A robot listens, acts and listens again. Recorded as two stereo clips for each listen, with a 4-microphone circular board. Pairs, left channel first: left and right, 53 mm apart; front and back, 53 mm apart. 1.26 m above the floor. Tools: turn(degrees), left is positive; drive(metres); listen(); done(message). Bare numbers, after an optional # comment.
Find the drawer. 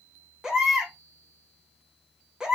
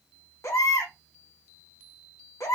listen()
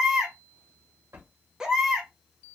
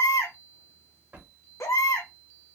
# The drawer: 120° right.
turn(-120)
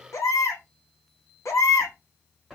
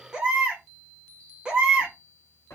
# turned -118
done("Facing the drawer.")